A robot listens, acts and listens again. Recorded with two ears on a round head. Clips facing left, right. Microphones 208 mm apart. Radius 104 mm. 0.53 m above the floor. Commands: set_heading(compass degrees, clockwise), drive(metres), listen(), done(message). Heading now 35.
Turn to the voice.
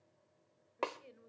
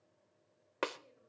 set_heading(325)
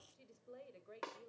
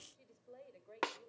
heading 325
set_heading(310)
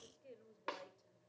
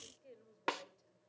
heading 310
done("Found it: a woman speaking, straight ahead, 2 to 4 m away.")